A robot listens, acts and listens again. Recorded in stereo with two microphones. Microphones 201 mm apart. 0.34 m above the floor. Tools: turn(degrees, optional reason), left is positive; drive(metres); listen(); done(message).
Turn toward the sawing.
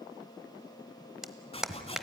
turn(degrees=30, reason="The sawing: about 30° left or 150° left.")
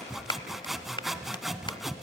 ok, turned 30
done("Found it: sawing, straight ahead.")